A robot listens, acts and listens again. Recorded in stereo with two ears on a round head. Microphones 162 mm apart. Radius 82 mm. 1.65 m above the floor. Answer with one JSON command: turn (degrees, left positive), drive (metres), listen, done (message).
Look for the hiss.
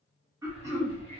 {"turn": 35}
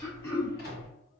{"turn": 110}
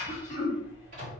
{"turn": -15}
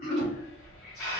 {"done": "Facing the hiss, 1 to 2 m away."}